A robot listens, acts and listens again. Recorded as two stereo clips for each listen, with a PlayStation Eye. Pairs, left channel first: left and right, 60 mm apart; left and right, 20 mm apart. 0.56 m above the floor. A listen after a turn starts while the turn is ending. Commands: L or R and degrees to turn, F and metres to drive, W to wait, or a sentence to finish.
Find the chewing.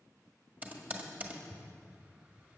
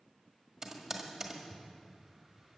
W
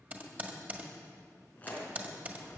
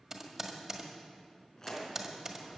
L25
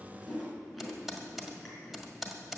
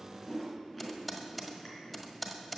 Found it: chewing, straight ahead, 2 to 4 m away.